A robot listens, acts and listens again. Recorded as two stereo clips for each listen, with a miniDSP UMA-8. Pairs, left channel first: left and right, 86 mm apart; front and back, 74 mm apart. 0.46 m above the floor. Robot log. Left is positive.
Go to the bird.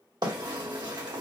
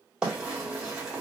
note: The bird: 100° right.
cmd yaw -100
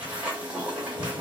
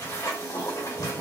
note: The bird is now 15° right.
cmd yaw -15
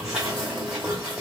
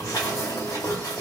cmd fwd 1.0
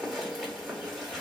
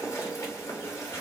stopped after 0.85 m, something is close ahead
end: Arrived at the bird, straight ahead.